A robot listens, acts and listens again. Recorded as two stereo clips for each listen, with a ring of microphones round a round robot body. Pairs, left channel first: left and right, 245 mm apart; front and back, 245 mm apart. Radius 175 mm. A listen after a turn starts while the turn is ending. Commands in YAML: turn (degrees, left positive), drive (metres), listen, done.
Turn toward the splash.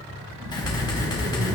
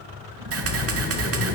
turn: -140
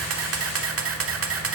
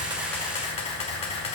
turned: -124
turn: -15
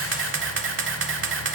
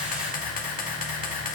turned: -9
done: "I heard a splash from this way, but can't make it out now."